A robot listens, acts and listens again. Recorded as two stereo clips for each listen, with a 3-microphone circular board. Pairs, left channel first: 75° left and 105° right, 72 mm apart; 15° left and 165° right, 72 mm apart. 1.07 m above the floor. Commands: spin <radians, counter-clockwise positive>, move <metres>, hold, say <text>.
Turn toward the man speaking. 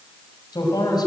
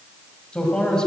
spin 1.66
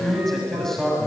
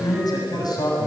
say Found it: a man speaking, straight ahead.